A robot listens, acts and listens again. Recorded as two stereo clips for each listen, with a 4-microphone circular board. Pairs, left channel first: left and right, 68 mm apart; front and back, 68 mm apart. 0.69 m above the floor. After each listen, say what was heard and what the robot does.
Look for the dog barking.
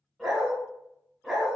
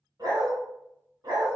The dog barking: 175° left. Turn 175° left.
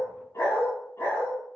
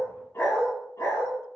The dog barking is now 35° left. Turn 35° left.
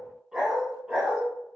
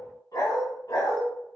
The dog barking is now 20° right. Turn 20° right.
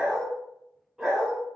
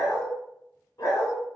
The dog barking is now 10° right. Turn 10° right.
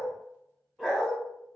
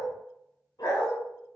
Found it: a dog barking, straight ahead, 1 to 2 m away.